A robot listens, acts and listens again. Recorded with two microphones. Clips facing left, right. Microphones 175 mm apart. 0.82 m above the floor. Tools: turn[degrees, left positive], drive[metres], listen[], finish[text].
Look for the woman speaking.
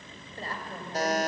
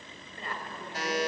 Thought: The woman speaking: about 35° left or 145° left.
Action: turn[35]
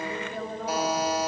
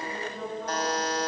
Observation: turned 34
Thought: So it is at 110° left.
Action: turn[110]
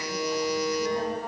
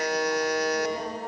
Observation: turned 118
Thought: Nothing new. It was at 10° right.
Action: turn[-10]
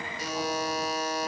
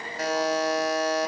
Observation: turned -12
Action: listen[]
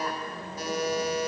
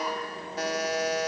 Action: finish[I heard a woman speaking from this way, but can't make it out now.]